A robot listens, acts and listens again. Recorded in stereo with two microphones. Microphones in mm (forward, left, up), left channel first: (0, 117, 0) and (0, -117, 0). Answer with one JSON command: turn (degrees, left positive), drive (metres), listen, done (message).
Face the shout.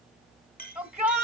{"turn": -30}
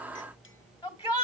{"turn": 20}
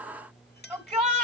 {"done": "Facing the shout, 2 to 4 m away."}